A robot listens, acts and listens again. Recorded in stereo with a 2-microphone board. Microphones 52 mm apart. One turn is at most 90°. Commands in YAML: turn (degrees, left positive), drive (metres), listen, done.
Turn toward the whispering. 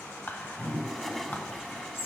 turn: 40
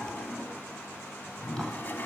listen: true
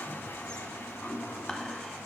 listen: true
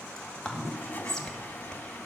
turn: 10
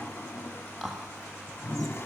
done: "Facing the whispering, 1 to 2 m away."